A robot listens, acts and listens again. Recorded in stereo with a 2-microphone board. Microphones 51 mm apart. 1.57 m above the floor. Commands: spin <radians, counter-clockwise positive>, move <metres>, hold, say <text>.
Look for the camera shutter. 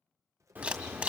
spin -0.44
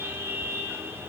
hold
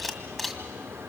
say Facing the camera shutter.